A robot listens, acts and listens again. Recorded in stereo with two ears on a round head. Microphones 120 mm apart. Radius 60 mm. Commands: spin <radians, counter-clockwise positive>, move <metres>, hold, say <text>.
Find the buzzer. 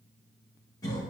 hold
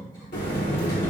spin 1.05
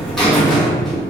say Found it: a buzzer, straight ahead.